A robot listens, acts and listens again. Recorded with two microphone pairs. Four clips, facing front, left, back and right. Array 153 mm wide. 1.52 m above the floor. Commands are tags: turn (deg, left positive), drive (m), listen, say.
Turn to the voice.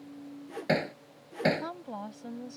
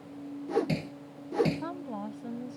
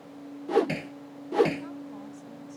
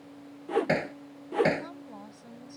<turn deg="25"/>
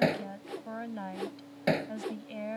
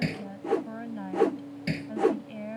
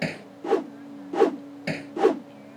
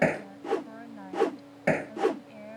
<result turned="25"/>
<turn deg="10"/>
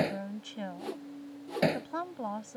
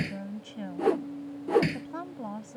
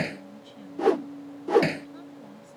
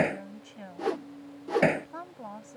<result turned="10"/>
<say>Facing the woman speaking.</say>